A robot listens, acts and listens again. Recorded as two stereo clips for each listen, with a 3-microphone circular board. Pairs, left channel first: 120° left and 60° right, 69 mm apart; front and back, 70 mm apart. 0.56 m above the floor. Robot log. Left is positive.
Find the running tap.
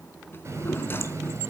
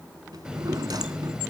note: The running tap: 100° right.
cmd yaw -100
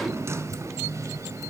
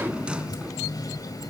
note: The running tap is now 20° right.
cmd yaw -20
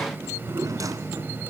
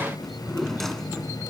end: Facing the running tap, 1 to 2 m away.